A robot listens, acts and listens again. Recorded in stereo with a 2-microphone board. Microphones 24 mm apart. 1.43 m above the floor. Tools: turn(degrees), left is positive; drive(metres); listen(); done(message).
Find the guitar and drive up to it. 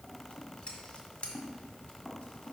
listen()
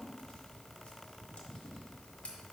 listen()
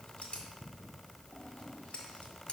done("I can't make out a guitar to turn to.")